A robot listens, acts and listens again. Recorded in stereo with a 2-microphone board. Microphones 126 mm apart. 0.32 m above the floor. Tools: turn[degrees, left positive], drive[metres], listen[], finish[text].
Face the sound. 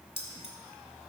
Thought: The keys jangling: about 55° left or 125° left.
Action: turn[55]
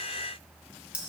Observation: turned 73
Thought: So it is at 10° right.
Action: turn[-10]
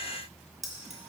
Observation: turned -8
Action: finish[Found it: keys jangling, straight ahead, 1 to 2 m away.]